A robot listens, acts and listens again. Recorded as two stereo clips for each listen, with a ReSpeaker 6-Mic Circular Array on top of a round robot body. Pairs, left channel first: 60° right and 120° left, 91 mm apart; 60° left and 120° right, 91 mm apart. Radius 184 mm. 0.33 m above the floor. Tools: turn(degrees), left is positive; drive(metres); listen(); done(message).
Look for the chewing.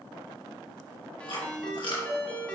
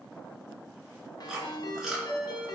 turn(degrees=-35)
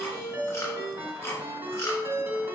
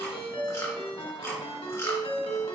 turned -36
done("Facing the chewing.")